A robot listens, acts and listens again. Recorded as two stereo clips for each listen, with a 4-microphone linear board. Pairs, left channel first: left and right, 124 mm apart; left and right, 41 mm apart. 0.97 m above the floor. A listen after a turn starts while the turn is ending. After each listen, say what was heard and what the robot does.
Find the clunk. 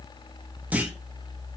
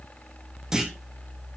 Turn 30° right.
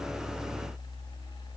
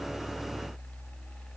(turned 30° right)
Keep listening.
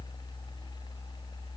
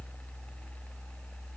I heard a clunk, but can't make it out now. It was about 15° left or 135° right.